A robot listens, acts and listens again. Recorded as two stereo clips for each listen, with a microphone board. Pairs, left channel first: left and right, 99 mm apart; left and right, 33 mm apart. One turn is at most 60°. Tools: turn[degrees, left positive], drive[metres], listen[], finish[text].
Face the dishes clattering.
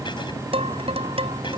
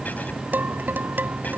Thought: The dishes clattering: about 75° right or 105° right.
Action: turn[-60]
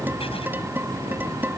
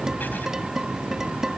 Thought: So it is at 20° right.
Action: turn[-20]
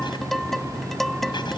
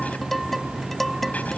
Action: finish[Facing the dishes clattering.]